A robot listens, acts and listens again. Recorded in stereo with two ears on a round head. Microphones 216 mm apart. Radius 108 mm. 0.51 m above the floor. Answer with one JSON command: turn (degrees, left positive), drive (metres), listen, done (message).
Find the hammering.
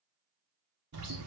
{"listen": true}
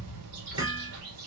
{"turn": -20}
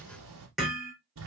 {"done": "Found it: hammering, straight ahead, over 4 m away."}